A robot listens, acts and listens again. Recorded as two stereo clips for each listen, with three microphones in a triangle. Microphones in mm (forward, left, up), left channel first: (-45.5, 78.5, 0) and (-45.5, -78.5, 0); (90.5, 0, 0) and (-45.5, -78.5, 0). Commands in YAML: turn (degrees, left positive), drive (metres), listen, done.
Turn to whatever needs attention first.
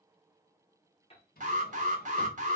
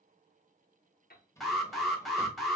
turn: -60
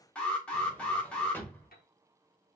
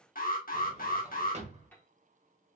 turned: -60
turn: 10
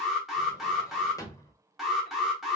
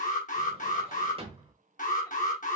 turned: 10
done: "Facing the alarm."